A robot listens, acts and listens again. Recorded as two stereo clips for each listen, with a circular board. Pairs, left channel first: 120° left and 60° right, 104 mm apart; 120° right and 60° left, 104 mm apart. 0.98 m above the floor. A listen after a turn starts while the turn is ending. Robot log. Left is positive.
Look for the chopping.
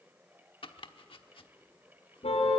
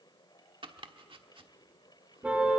note: The chopping: 90° left.
cmd yaw +90
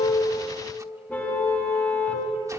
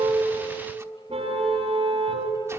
cmd idle
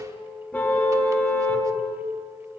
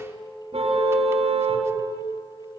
cmd idle
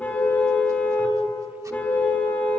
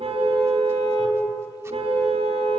end: I heard chopping from this way, but can't make it out now.